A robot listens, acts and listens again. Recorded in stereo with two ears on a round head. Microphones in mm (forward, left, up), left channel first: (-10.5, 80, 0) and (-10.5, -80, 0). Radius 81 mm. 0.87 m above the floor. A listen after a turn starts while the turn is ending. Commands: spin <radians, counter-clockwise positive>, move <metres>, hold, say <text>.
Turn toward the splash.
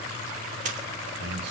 spin -0.70
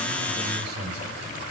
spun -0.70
hold
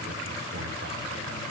say I heard a splash, but can't make it out now. It was about straight ahead or 100° right.